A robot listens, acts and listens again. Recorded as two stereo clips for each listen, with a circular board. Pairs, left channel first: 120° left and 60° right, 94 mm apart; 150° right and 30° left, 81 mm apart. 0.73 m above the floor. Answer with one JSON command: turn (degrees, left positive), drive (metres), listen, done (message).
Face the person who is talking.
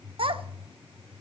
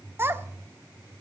{"turn": -35}
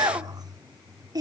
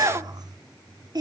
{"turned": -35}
{"turn": -10}
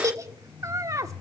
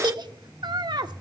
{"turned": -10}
{"done": "Facing the child speaking."}